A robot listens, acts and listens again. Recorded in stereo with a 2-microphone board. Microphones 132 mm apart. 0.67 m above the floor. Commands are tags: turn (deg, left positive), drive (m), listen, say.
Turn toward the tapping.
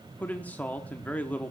<listen/>
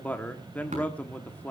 <turn deg="-75"/>
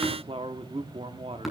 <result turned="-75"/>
<say>Found it: tapping, straight ahead.</say>